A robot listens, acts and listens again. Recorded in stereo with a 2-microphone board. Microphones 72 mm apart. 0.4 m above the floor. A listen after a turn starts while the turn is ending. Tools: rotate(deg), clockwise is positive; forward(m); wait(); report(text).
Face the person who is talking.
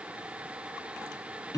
wait()
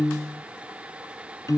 wait()
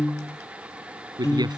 rotate(75)
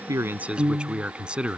rotate(15)
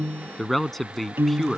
report("Found it: a man speaking, straight ahead.")